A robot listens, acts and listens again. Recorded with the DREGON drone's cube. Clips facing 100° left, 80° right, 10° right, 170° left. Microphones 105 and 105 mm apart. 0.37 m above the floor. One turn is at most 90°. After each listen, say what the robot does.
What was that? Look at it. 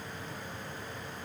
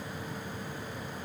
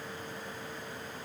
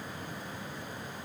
Keep listening.
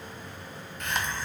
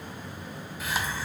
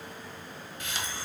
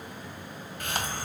Turn 90° right.
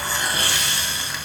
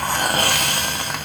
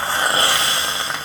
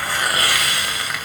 Turn 65° right.
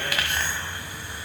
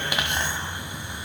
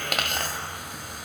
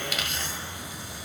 Turn 15° right.
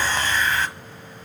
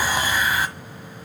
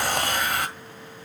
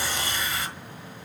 Facing the hiss.